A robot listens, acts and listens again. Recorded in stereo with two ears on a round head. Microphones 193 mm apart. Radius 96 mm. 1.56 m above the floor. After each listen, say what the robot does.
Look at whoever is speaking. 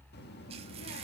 Turn 50° left.
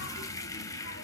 Keep listening.
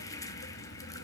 Turn 65° left.
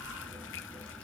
Found it: a child speaking, straight ahead, 1 to 2 m away.